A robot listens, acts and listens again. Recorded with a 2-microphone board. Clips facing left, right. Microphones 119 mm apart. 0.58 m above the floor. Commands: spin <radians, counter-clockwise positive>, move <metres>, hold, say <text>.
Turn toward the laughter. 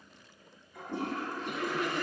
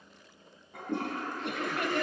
spin -1.22
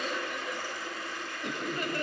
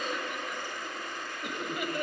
spin -0.17
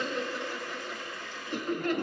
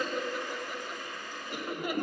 spin -0.17
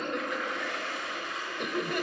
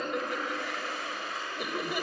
say Facing the laughter, 2 to 4 m away.